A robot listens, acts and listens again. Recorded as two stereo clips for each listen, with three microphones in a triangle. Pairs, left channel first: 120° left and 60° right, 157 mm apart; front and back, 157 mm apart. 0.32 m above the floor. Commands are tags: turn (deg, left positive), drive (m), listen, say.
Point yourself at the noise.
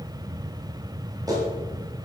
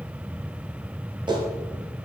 <turn deg="-120"/>
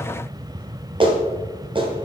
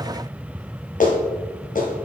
<turn deg="-10"/>
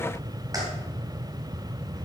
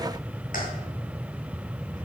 <listen/>
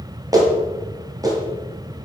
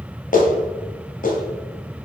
<say>Found it: a clap, straight ahead, 1 to 2 m away.</say>